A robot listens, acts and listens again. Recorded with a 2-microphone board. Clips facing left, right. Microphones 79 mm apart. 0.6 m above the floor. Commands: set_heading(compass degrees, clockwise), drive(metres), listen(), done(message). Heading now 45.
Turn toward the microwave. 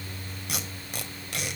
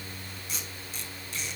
listen()
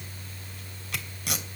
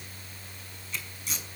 listen()
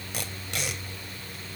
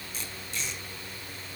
done("I can't make out a microwave to turn to.")